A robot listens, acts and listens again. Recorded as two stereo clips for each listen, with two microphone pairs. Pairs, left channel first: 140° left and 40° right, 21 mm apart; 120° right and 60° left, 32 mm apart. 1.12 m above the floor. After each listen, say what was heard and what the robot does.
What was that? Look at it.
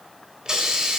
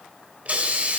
The hiss: 15° left. Turn 15° left.
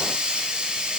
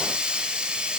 Found it: a hiss, straight ahead, over 4 m away.